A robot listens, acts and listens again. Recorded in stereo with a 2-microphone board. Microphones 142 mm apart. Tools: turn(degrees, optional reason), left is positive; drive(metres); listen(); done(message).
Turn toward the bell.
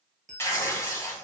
turn(degrees=-60, reason="The bell: about 60° right or 120° right.")
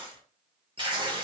listen()
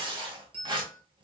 turn(degrees=-45, reason="So it is at 45° right.")
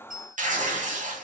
done("Facing the bell, under 1 m away.")